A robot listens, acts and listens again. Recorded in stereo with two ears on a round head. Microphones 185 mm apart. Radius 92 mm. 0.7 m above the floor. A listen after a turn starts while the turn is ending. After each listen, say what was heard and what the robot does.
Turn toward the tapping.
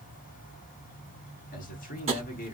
The tapping: about 30° right or 150° right. Turn 30° right.
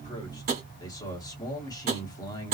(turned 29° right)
So it is at 115° right. Turn 115° right.
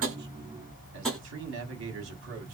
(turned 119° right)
Found it: tapping, straight ahead.